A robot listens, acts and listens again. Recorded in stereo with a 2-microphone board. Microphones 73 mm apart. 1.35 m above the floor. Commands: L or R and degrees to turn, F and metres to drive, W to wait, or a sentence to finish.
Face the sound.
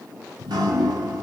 R75
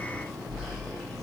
Facing the dripping, under 1 m away.